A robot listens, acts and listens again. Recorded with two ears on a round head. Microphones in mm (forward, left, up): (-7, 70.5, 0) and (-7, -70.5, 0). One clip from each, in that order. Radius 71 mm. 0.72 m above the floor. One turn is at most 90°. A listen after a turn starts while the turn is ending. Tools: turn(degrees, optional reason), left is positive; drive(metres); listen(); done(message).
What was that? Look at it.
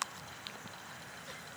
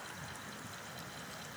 listen()
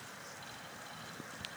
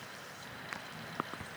listen()
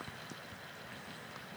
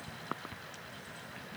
done("I can't make out anything to turn to.")